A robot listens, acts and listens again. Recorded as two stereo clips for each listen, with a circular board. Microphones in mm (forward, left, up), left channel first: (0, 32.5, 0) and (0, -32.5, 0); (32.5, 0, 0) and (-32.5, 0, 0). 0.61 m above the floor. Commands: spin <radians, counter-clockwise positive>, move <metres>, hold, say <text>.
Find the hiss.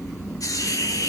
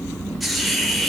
spin 1.57
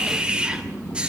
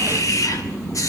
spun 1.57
spin -0.26
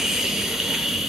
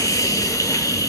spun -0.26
say Found it: a hiss, straight ahead, 2 to 4 m away.